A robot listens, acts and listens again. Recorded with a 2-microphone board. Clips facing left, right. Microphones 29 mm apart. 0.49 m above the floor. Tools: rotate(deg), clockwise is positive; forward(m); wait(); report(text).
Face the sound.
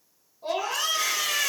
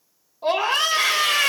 rotate(55)
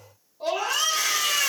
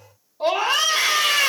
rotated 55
rotate(55)
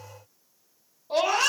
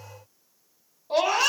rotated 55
rotate(10)
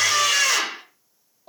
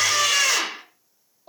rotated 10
report("Facing the scream, 1 to 2 m away.")